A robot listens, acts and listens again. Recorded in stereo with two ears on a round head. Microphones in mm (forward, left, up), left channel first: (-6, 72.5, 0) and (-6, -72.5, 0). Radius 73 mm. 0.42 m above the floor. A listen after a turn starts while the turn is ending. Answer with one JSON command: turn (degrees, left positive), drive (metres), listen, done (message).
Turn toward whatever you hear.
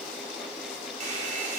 {"turn": -55}
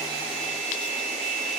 {"turn": -55}
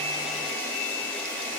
{"turn": 10}
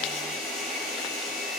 {"done": "Found it: a hair dryer, straight ahead."}